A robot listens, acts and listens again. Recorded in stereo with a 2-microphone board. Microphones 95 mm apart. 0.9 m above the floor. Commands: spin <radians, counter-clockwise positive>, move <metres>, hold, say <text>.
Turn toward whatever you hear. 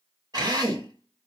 spin -0.79
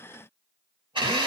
spin -1.48
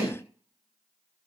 spin -0.26
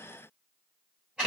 spin -0.17
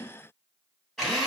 say Facing the drill.